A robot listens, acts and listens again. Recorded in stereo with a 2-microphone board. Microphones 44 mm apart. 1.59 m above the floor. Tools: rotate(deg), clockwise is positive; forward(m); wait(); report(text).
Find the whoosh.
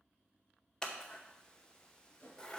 rotate(-50)
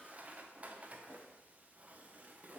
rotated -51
wait()
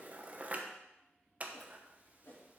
rotate(-70)
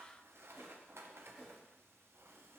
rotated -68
report("Found it: a whoosh, straight ahead, 2 to 4 m away.")